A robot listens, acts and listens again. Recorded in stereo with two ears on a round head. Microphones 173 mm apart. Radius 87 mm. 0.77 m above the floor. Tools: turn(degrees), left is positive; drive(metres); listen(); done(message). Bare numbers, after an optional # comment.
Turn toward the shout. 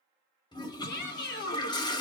# The shout: about 55° left or 125° left.
turn(55)
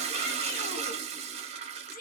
# So it is at 55° left.
turn(55)
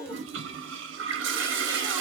# The shout is now 20° left.
turn(20)
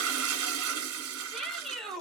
done("Found it: a shout, straight ahead.")